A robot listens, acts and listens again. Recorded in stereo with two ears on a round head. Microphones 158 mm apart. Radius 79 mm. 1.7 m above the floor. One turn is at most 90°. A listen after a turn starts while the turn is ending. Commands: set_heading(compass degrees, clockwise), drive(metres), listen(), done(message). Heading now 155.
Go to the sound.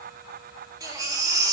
set_heading(175)
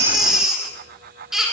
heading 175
drive(1.0)
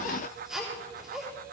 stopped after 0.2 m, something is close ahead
done("Something is in my way. I am facing the baby crying but have not reached it.")